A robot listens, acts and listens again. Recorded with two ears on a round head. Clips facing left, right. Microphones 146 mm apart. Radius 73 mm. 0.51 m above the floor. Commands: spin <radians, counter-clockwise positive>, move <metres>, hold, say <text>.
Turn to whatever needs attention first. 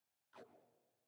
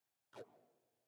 hold
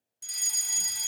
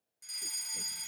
spin 0.70
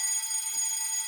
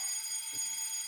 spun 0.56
spin 1.66
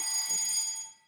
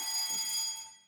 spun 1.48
spin 0.26
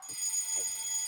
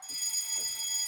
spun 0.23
say Found it: a fire alarm, straight ahead.